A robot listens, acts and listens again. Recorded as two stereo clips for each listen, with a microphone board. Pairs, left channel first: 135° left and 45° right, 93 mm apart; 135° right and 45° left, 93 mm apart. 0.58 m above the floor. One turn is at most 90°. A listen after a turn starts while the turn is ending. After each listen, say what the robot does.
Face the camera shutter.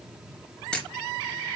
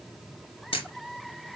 Turn 90° right.
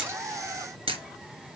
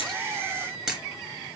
Turn 35° right.
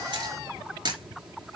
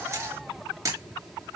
Turn 10° right.
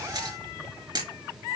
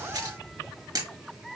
Facing the camera shutter, 2 to 4 m away.